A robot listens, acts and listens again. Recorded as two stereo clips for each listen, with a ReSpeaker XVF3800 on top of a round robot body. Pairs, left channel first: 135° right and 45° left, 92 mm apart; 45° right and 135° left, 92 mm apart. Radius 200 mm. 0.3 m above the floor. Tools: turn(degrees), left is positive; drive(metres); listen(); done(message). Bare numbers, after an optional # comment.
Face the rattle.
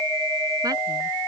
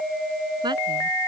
listen()
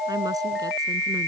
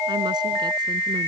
listen()
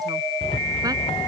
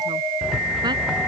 # The rattle: 140° right.
turn(-140)
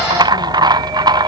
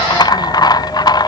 done("Facing the rattle.")